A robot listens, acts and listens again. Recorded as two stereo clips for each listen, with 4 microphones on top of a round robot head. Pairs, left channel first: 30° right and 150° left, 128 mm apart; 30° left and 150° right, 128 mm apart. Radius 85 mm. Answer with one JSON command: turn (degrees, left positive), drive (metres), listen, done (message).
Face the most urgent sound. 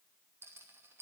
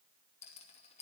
{"listen": true}
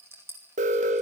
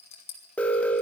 {"turn": 110}
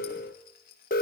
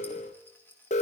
{"done": "Facing the alarm."}